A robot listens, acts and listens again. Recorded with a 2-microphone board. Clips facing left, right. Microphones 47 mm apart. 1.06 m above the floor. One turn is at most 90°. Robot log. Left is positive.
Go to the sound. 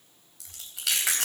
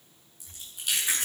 cmd yaw +90
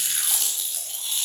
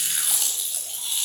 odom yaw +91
cmd fwd 1.0
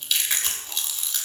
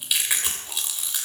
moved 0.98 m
note: The chewing is now 10° right.
cmd yaw -10
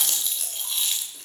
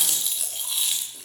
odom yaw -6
cmd fwd 1.0
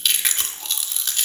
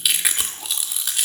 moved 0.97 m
cmd fwd 1.0
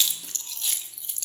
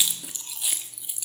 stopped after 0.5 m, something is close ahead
note: The chewing is now 10° right.
cmd yaw -10
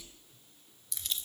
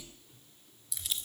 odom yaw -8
end: I am next to the chewing.